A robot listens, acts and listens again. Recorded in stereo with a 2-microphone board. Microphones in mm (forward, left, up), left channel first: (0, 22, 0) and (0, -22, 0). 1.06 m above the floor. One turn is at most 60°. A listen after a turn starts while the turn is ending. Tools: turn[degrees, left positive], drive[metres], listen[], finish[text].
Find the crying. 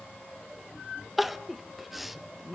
Action: turn[-30]
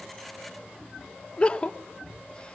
Thought: So it is at 25° left.
Action: turn[25]
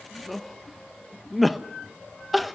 Action: finish[Facing the crying, under 1 m away.]